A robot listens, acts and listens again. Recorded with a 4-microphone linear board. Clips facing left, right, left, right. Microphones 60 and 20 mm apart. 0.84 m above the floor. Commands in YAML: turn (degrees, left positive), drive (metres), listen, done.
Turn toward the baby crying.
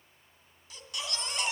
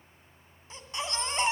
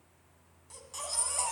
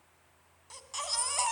turn: -30
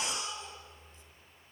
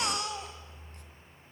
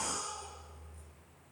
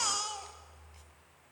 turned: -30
turn: -120
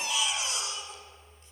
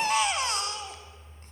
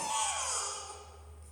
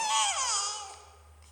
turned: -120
turn: -50
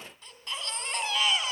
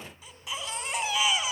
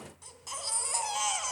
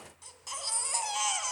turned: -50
turn: -10
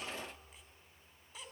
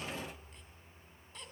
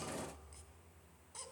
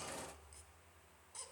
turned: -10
done: "Facing the baby crying."